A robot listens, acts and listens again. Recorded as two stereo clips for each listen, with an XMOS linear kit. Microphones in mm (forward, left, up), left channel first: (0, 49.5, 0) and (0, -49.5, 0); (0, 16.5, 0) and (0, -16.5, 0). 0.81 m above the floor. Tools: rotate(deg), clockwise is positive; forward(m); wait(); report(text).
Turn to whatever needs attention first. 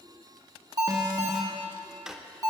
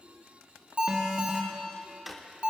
rotate(40)
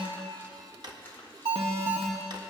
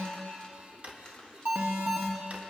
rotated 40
rotate(100)
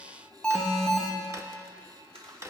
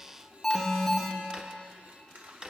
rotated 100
report("Found it: an alarm, straight ahead.")